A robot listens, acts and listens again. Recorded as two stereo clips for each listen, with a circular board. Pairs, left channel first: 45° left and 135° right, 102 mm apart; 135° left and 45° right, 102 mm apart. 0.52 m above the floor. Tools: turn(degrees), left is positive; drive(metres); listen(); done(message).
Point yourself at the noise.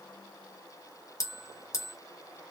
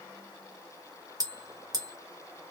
done("Facing the bell, 1 to 2 m away.")